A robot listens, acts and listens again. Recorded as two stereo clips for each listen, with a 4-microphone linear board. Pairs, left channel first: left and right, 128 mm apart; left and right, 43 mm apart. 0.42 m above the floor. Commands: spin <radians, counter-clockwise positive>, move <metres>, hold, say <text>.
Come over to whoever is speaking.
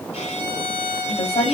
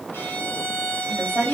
spin 1.05
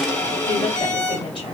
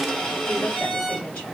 hold
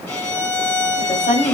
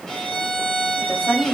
spin 0.96
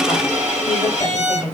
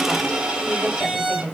spin 0.35
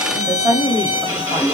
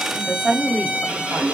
move 1.0
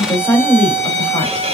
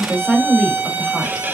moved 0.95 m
spin 0.35
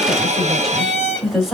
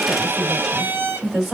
move 1.0
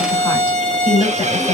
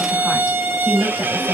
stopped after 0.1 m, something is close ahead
say Arrived at the woman speaking, straight ahead.